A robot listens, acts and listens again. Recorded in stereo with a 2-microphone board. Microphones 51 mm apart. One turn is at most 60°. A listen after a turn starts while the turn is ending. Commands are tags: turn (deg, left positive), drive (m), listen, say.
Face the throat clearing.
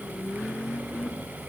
<listen/>
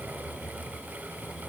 <listen/>
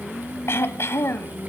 <turn deg="60"/>
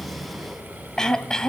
<turn deg="15"/>
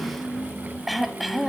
<say>Facing the throat clearing, 1 to 2 m away.</say>